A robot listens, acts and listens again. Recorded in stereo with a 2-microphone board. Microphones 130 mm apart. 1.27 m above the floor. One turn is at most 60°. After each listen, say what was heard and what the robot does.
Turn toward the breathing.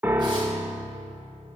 Keep listening.
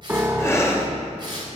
The breathing: about 20° left or 160° left. Turn 20° left.
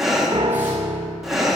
Facing the breathing, 1 to 2 m away.